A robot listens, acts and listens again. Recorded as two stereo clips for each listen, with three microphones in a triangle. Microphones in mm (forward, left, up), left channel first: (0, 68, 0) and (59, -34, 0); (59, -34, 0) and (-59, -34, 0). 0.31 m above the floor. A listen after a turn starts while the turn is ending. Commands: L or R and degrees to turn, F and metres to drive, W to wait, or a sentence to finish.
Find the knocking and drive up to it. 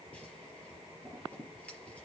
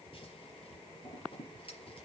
W
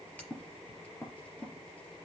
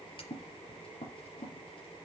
W
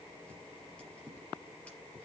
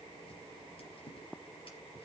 I can't make out knocking, only scissors.